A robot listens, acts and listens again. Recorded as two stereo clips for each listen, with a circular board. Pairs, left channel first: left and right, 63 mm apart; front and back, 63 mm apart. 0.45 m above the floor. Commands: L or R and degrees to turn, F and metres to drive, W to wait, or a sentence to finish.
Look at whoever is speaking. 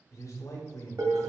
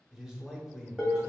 L100
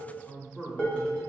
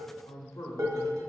Found it: a man speaking, straight ahead.